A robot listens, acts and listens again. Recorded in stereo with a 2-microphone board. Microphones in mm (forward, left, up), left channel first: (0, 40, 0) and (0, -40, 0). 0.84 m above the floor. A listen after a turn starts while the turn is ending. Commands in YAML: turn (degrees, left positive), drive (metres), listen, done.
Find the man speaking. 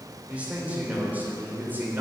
turn: -25
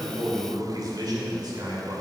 turn: -120
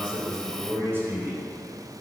turn: -25
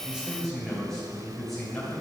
done: "Facing the man speaking."